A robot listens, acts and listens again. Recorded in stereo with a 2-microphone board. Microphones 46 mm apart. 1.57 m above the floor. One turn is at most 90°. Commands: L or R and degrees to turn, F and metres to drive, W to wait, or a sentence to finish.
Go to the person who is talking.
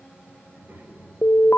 R50
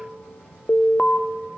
W
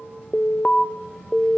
F1.0
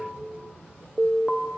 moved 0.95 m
W
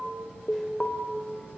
W
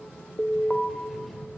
F1.0
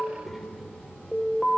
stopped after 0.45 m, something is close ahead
Something is in my way. I am facing the child speaking but have not reached it.